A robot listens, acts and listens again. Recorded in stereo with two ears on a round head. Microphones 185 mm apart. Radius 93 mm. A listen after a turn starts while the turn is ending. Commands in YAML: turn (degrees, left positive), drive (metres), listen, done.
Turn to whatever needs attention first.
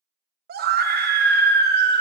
turn: -45
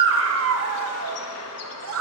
turn: -80
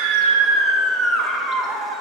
done: "Found it: a scream, straight ahead, 1 to 2 m away."